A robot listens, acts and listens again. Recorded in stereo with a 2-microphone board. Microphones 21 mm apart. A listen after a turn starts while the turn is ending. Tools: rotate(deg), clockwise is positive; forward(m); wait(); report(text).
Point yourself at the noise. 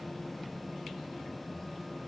wait()
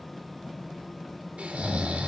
rotate(90)
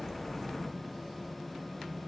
wait()
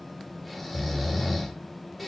report("Found it: snoring, straight ahead, 1 to 2 m away.")